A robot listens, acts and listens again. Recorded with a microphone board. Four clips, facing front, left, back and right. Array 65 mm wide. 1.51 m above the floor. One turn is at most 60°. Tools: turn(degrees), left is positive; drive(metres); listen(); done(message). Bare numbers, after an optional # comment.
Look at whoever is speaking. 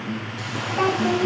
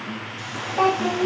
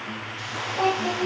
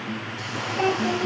# The child speaking: 65° left.
turn(60)
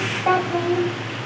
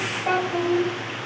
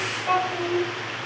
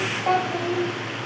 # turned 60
# The child speaking is now 15° right.
turn(-15)
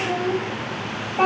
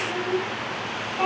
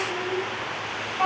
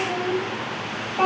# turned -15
# The child speaking is now 25° right.
turn(-25)
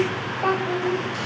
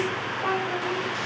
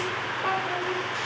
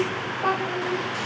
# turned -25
# The child speaking is now 15° right.
turn(-15)
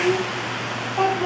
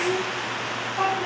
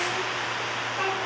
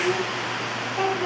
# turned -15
done("Facing the child speaking.")